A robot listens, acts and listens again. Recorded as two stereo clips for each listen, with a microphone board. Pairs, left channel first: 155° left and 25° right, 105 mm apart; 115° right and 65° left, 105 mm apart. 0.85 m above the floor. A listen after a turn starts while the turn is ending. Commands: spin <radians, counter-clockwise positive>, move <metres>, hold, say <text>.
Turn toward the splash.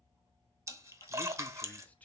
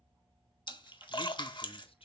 spin -1.40
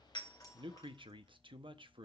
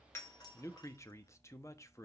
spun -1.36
say Facing where the splash came from. I can't hear it now.